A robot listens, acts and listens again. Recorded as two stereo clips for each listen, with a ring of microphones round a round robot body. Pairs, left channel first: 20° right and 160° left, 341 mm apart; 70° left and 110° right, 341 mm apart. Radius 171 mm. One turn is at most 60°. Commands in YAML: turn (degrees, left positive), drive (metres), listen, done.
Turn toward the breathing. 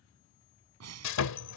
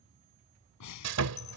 turn: 60
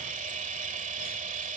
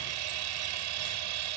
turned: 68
turn: 40
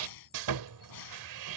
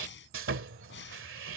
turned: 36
turn: 10
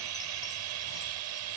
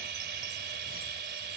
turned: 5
listen: true
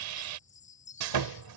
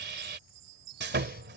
listen: true
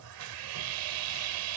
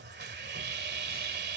done: "Facing where the breathing came from. I can't hear it now."